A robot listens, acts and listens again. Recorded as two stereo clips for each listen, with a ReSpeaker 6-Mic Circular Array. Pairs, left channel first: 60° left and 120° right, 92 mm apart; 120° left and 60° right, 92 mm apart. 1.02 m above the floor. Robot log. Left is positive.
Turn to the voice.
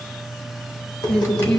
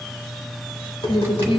note: The woman speaking: 140° left.
cmd yaw +140
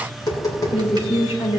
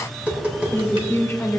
note: The woman speaking is now 55° left.
cmd yaw +55
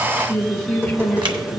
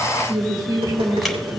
note: The woman speaking is now 15° right.
cmd yaw -15
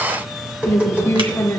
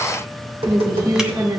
end: Found it: a woman speaking, straight ahead.